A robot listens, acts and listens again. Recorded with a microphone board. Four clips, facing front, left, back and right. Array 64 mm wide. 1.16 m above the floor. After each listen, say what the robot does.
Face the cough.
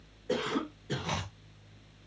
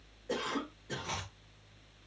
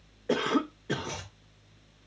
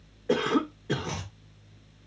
Turn 140° right.
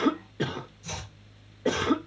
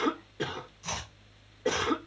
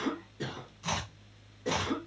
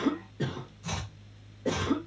Turn 20° left.
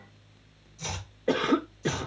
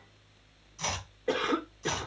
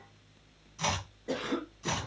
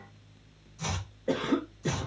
Turn 10° left.
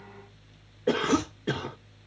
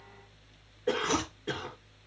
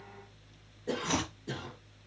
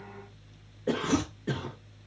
Facing the cough.